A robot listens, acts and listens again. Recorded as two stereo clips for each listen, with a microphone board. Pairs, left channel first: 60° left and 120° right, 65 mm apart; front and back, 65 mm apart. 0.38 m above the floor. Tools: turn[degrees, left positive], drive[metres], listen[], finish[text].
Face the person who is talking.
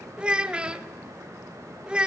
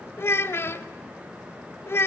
Thought: The child speaking: 50° right.
Action: turn[-50]
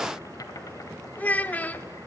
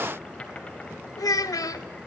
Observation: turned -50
Action: finish[Found it: a child speaking, straight ahead.]